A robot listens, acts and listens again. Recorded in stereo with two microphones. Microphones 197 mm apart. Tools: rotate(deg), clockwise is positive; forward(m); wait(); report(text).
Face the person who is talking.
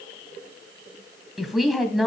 rotate(-30)
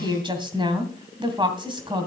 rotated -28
rotate(25)
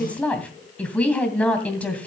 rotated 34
rotate(-10)
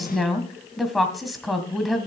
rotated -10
report("Facing the woman speaking, 2 to 4 m away.")